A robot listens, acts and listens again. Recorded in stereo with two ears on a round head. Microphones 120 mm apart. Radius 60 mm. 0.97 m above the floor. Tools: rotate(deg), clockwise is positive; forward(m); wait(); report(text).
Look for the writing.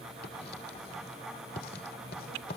rotate(-90)
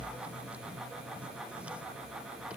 wait()
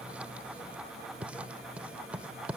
rotate(10)
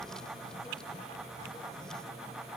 wait()
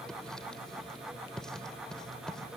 report("Facing the writing.")